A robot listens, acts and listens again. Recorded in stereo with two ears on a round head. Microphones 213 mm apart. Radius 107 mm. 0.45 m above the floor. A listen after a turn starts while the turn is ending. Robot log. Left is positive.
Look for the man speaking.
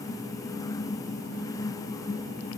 cmd idle
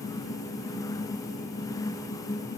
cmd idle
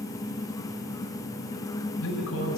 note: The man speaking: about 60° left or 120° left.
cmd yaw +60
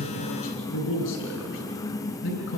note: So it is at 55° left.
cmd yaw +55
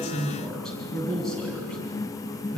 end: Facing the man speaking.